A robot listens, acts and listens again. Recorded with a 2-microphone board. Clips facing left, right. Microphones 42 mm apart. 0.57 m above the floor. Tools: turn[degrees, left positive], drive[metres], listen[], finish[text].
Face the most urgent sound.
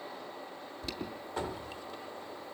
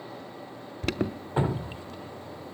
Thought: The alarm: about 65° right or 115° right.
Action: turn[-65]
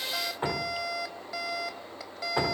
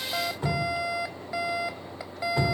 Thought: So it is at 20° right.
Action: turn[-20]
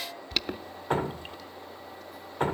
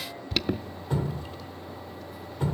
Action: finish[Facing the alarm.]